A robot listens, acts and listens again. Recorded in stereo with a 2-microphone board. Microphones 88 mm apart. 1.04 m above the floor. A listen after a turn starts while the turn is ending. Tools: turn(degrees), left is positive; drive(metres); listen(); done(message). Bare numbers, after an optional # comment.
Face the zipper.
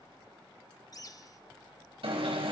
listen()
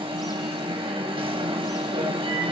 listen()
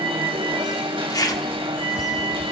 # The zipper: about 40° left or 140° left.
turn(40)
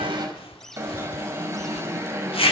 # So it is at 95° left.
turn(95)
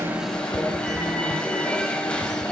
listen()
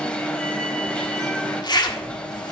# The zipper is now 50° left.
turn(50)
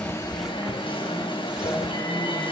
listen()
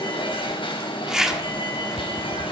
done("Facing the zipper.")